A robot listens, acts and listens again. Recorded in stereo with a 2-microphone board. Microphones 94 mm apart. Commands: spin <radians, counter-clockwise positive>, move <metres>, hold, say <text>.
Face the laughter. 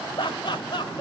spin 1.05
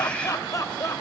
spin 0.70
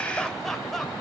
hold
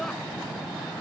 hold
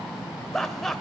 say Found it: laughter, straight ahead.